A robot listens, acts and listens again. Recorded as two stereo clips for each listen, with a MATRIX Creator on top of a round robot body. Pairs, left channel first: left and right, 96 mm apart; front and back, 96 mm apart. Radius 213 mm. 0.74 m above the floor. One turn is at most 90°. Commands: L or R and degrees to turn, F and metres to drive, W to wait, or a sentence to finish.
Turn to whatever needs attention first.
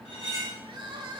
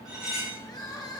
R50
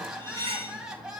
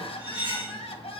Found it: crying, straight ahead, 1 to 2 m away.